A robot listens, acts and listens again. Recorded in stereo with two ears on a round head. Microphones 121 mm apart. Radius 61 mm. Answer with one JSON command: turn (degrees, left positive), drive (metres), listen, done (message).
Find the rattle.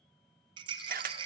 {"turn": -35}
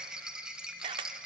{"done": "Facing the rattle, 1 to 2 m away."}